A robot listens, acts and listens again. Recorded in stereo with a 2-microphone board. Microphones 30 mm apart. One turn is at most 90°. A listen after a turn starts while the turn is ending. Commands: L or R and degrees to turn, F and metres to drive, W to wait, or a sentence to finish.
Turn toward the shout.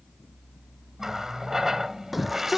R30
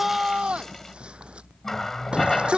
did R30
R90
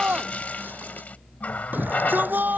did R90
R80
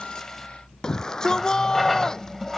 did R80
L20
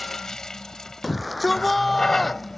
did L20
Facing the shout.